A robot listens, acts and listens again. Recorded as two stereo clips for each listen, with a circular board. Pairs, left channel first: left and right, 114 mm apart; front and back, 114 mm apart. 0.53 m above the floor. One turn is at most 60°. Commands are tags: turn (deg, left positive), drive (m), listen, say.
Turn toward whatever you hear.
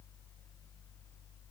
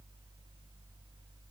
<listen/>
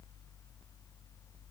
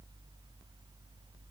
<listen/>
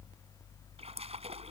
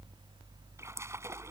<turn deg="-60"/>
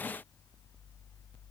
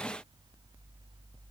<turn deg="-55"/>
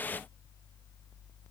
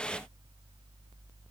<say>I heard a splash from this way, but can't make it out now.</say>